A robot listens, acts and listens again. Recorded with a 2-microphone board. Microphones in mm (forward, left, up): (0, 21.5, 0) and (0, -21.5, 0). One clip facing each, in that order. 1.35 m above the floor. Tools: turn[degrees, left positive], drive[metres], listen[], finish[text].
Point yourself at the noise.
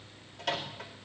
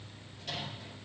Action: turn[90]
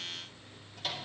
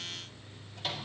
Action: finish[Found it: a microwave, straight ahead, 2 to 4 m away.]